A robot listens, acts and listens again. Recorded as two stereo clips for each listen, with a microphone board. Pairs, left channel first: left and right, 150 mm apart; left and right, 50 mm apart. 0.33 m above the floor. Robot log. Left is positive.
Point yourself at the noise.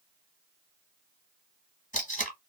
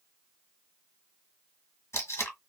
note: The tape being pulled: about 60° left or 120° left.
cmd yaw +60
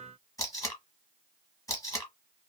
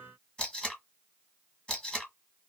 note: So it is at 25° left.
cmd yaw +25
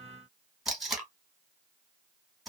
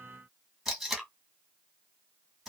end: Found it: tape being pulled, straight ahead, 1 to 2 m away.